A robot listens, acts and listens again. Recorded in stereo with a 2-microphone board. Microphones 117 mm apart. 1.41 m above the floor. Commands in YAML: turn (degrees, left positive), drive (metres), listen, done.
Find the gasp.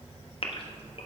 turn: 50
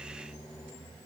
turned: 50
listen: true
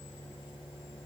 done: "I heard a gasp, but can't make it out now. It was about straight ahead or 80° left."